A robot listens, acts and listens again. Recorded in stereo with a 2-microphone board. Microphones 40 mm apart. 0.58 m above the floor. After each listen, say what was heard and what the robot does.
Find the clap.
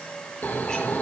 Keep listening.
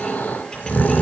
Keep listening.
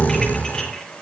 I can't make out a clap, only snoring.